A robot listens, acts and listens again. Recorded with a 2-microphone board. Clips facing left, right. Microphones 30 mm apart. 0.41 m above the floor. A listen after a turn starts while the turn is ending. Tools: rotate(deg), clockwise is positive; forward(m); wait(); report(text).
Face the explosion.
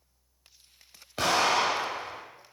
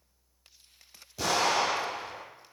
rotate(-70)
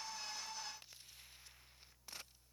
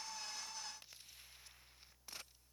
wait()
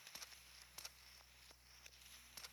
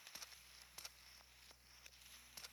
report("I heard an explosion, but can't make it out now. It was about straight ahead or 40° left.")